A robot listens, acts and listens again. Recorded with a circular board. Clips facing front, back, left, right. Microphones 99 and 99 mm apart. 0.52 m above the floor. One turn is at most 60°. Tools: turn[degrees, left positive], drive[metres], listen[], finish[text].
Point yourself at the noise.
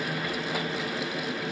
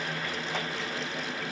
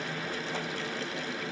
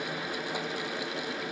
Action: listen[]
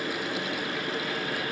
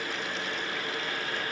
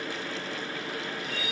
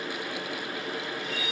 Action: listen[]
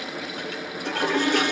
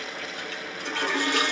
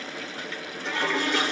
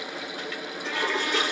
Thought: The toilet flushing: 30° left.
Action: turn[30]
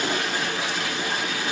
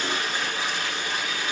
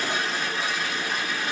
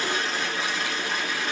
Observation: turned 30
Thought: The toilet flushing is now 10° left.
Action: turn[10]
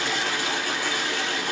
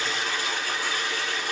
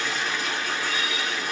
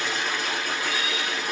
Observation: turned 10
Action: finish[Facing the toilet flushing, 2 to 4 m away.]